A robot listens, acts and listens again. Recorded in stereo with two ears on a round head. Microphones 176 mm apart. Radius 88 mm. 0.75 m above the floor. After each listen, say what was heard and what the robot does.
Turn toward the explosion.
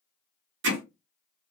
Keep listening.
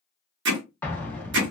Turn 30° left.
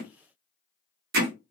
Keep listening.
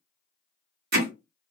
I heard an explosion, but can't make it out now. It was about 20° right or 140° left.